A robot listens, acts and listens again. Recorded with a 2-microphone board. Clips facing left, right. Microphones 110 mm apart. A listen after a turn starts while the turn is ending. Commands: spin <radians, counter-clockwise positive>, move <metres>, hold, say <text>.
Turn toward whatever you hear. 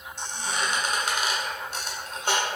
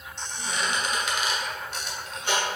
spin 0.70
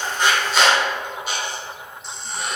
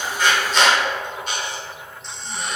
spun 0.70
say Found it: a squeak, straight ahead.